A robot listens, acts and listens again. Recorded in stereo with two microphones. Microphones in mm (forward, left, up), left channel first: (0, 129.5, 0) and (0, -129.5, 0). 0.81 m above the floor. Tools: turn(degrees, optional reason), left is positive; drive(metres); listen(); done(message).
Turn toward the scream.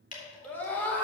turn(degrees=30)
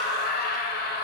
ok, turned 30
turn(degrees=140, reason="So it is at 140° left.")
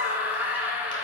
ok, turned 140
turn(degrees=-10, reason="The scream is now 10° right.")
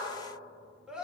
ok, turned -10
done("Facing the scream.")